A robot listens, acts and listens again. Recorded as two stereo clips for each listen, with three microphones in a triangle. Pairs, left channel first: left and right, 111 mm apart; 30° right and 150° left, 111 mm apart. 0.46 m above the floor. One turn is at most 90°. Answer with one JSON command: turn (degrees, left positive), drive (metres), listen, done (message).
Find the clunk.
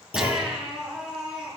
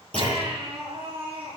{"turn": 50}
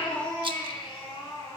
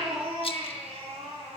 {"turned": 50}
{"done": "I heard a clunk from this way, but can't make it out now."}